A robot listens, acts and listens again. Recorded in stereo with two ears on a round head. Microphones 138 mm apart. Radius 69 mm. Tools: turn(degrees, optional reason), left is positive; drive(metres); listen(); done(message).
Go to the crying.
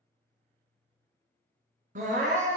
turn(degrees=-55, reason="The crying: about 55° right or 125° right.")
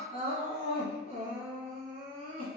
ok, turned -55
turn(degrees=-60, reason="So it is at 60° right.")
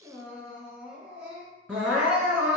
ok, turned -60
turn(degrees=-10, reason="The crying is now 10° right.")
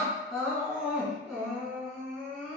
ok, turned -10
drive(metres=1.0)
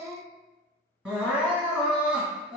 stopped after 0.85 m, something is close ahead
turn(degrees=-10, reason="The crying is now 10° right.")
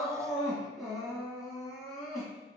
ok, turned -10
done("I am next to the crying.")